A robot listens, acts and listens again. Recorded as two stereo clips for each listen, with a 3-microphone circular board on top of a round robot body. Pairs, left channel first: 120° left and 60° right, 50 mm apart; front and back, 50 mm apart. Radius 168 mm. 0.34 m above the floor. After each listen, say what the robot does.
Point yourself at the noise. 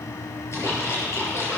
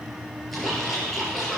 Turn 85° left.
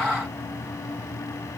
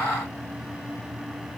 I heard a splash from this way, but can't make it out now.